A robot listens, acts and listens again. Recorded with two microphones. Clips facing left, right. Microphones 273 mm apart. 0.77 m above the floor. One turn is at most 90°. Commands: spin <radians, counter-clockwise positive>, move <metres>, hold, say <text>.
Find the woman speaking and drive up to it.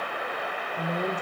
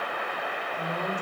spin 0.61
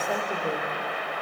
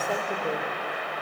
hold
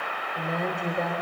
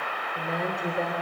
move 1.0
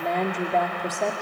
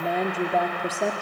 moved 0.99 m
move 1.0
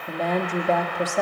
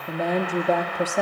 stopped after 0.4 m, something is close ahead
spin -0.17
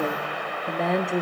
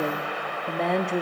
say Arrived at the woman speaking, straight ahead.